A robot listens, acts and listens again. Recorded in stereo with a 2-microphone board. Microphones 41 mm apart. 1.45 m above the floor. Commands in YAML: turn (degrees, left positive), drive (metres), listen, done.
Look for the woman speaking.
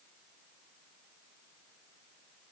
listen: true
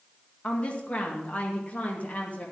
turn: 40
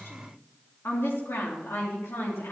turn: 95
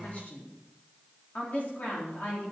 turn: 40
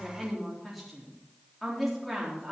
done: "Found it: a woman speaking, straight ahead, 2 to 4 m away."